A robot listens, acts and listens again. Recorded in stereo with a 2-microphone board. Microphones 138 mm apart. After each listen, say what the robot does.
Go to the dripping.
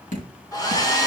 Turn 65° left.
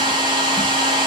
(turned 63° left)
Keep listening.
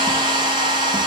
Keep listening.
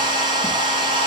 I heard dripping, but can't make it out now. It was about straight ahead or 55° left. I did not reach it.